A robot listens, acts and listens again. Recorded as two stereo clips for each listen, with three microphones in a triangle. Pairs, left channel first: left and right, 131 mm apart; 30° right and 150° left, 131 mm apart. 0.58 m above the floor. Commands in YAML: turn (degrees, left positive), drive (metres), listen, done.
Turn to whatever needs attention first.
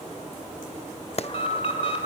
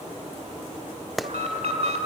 turn: 125
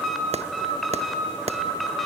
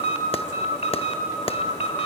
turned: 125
done: "Facing the alarm."